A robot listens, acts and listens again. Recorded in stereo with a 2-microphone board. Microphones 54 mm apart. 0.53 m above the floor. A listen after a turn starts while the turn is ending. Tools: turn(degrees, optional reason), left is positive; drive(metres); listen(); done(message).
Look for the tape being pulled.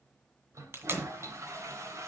turn(degrees=-45, reason="The tape being pulled: about 45° right or 135° right.")
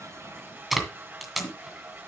done("Facing the tape being pulled, 2 to 4 m away.")